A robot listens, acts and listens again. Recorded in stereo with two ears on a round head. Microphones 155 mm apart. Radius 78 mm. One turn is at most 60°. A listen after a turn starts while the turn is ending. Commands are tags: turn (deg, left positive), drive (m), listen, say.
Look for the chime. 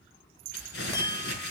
<turn deg="25"/>
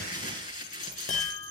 <turn deg="60"/>
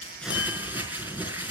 <turn deg="60"/>
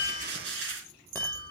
<turn deg="10"/>
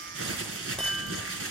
<say>Facing the chime.</say>